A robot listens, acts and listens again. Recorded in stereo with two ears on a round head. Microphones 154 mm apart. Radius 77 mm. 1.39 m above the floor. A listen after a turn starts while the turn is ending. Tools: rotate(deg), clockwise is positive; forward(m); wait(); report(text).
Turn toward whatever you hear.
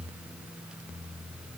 wait()
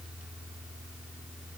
wait()
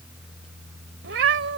rotate(90)
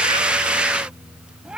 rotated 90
report("Facing the cat meowing.")